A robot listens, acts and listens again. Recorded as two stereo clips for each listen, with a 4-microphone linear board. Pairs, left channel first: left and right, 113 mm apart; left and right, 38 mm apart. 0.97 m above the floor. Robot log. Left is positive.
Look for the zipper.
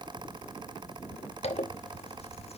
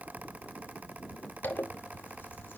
note: The zipper: about 65° left or 115° left.
cmd yaw +65
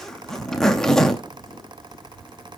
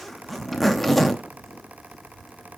end: Facing the zipper, under 1 m away.